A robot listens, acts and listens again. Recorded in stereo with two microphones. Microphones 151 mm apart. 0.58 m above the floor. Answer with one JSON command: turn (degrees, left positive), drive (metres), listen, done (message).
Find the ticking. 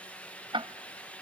{"turn": -35}
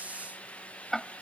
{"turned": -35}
{"done": "Found it: ticking, straight ahead."}